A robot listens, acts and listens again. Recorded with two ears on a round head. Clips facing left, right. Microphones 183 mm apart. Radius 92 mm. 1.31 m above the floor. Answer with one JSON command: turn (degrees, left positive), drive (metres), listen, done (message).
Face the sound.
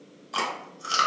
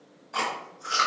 {"turn": 50}
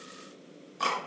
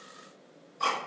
{"turn": 75}
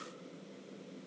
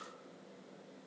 {"listen": true}
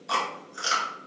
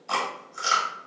{"turn": 10}
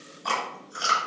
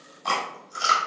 {"done": "Facing the chewing."}